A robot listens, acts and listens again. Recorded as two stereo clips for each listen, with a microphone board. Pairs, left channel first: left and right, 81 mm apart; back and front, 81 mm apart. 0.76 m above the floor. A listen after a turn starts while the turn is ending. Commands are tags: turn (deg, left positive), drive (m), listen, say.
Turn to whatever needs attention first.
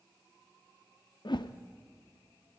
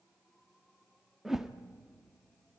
<listen/>
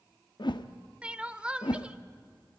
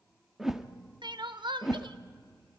<turn deg="-15"/>
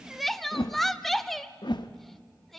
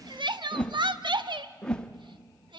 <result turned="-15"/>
<say>Found it: crying, straight ahead.</say>